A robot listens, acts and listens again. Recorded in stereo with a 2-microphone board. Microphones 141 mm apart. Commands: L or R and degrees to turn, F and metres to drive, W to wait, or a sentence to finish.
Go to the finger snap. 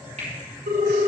R55
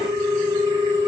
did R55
W
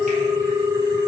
W
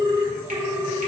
I heard a finger snap, but can't make it out now. It was about straight ahead or 70° right. I did not reach it.